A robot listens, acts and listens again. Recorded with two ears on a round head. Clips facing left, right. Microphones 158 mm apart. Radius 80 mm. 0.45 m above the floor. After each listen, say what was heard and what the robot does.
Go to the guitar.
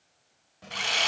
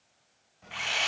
Keep listening.
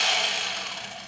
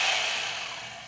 Keep listening.
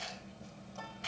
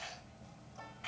I can't make out a guitar, only whispering and sawing.